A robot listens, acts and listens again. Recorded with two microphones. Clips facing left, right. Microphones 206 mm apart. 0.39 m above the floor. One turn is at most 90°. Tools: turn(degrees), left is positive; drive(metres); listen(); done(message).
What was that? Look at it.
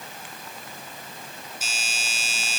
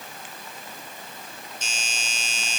turn(degrees=30)
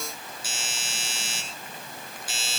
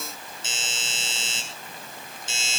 turn(degrees=-25)
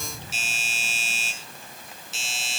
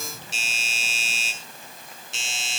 done("Found it: a doorbell, straight ahead.")